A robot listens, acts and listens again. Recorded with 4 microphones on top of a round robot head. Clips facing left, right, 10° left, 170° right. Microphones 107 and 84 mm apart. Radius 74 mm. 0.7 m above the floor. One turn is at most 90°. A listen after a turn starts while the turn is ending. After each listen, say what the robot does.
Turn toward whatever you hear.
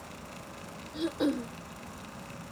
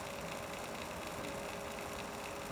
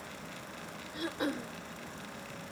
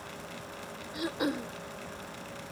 Turn 90° left.
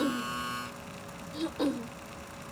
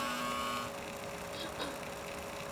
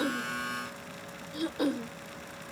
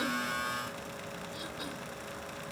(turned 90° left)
Turn 40° left.
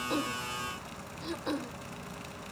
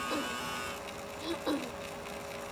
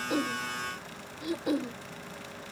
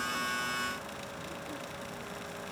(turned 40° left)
Turn 10° right.
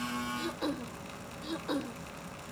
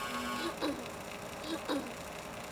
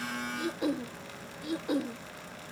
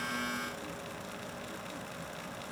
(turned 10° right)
Found it: throat clearing, straight ahead.